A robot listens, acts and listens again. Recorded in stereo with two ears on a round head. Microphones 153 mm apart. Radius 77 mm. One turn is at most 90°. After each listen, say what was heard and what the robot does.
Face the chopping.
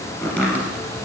Turn 30° left.
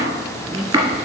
So it is at 20° right. Turn 20° right.
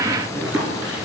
Facing the chopping, 1 to 2 m away.